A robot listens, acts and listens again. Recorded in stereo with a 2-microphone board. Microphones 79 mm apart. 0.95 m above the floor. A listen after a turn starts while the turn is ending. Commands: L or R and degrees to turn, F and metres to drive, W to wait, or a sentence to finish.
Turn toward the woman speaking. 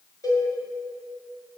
W
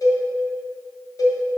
W
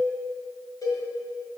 I can't make out a woman speaking, only a cowbell.